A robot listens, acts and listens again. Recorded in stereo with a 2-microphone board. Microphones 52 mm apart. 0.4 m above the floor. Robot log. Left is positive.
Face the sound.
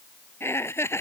note: The laughter: about 55° left or 125° left.
cmd yaw +55
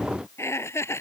note: So it is at 60° left.
cmd yaw +60
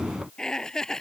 note: The laughter is now 10° left.
cmd yaw +10
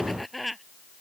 end: Facing the laughter.